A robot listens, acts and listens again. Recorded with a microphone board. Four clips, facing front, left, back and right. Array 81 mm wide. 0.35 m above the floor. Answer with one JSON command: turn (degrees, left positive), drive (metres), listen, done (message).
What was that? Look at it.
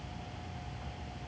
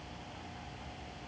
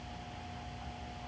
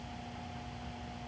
{"listen": true}
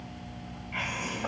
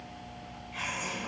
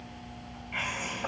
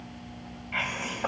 {"turn": -95}
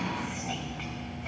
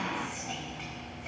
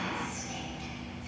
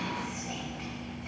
{"turn": 10}
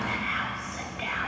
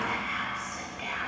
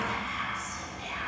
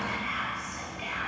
{"done": "Facing the whispering."}